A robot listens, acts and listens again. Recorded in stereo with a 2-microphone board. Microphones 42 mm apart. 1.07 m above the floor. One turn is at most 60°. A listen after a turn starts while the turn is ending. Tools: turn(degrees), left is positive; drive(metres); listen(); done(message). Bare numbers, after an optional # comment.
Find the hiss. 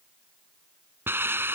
# The hiss: about 70° right or 110° right.
turn(-60)
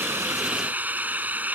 # So it is at 45° right.
turn(-45)
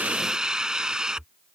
# The hiss is now 20° right.
turn(-20)
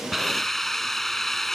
done("Facing the hiss.")